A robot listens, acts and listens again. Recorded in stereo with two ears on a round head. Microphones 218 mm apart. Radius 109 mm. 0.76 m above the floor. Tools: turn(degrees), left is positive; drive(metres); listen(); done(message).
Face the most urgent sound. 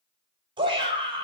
turn(degrees=-20)
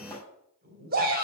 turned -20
turn(degrees=-140)
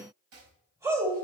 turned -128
turn(degrees=-10)
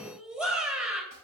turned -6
done("Facing the shout, 2 to 4 m away.")